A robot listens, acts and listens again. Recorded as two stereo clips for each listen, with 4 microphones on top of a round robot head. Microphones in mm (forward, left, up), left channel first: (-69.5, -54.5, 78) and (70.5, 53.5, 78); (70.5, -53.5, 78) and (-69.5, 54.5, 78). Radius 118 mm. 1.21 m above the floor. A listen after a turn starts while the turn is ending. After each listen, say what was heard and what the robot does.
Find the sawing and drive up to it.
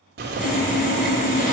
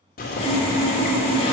The sawing: 95° right. Turn 95° right.
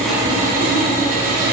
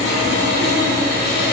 Drive 1.0 m forward.
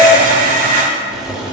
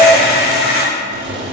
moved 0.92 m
Drive 1.0 m forward.
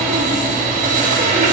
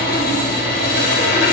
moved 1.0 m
Drive 1.0 m forward.
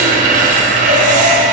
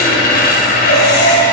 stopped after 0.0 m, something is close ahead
Arrived at the sawing, straight ahead.